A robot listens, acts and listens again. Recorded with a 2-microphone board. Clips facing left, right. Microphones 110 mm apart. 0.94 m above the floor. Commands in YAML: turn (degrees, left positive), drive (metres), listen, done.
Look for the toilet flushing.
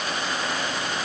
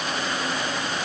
listen: true
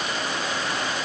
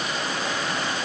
listen: true
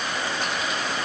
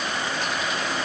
done: "I can't make out a toilet flushing to turn to."